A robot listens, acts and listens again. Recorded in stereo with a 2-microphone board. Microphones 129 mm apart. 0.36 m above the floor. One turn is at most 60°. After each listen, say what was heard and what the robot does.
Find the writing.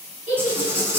The writing: about 20° right or 160° right. Turn 20° right.
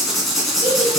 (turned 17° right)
Found it: writing, straight ahead.